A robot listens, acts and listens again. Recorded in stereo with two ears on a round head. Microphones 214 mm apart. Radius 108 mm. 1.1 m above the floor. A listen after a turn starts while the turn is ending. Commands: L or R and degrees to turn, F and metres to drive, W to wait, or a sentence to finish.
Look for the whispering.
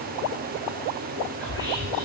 R20
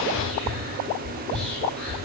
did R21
Facing the whispering.